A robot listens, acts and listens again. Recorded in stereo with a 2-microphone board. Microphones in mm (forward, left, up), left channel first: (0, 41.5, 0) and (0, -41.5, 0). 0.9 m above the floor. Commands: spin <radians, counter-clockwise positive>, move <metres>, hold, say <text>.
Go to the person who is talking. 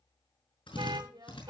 spin -0.87
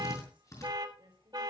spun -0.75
spin -1.57
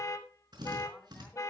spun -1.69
spin 0.17
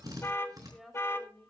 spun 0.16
move 1.0
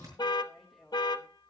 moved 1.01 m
move 1.0
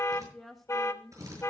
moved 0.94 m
move 1.0
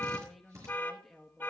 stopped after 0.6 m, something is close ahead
say Arrived at the woman speaking, straight ahead.